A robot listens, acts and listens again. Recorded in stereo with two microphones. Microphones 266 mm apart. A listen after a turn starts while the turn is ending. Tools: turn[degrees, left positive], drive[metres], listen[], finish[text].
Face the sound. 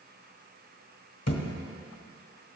Thought: The thud: about 70° left or 110° left.
Action: turn[70]
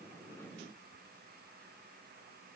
Action: listen[]
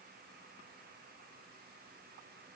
Action: finish[I heard a thud, but can't make it out now. It was about straight ahead or 40° left.]